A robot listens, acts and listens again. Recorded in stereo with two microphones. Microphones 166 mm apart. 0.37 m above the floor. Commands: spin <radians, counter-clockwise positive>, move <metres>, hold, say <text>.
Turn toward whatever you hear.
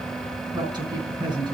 spin -0.44
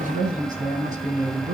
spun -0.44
spin -2.27
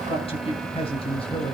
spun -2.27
spin 0.61
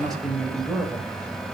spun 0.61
say Facing the man speaking, 2 to 4 m away.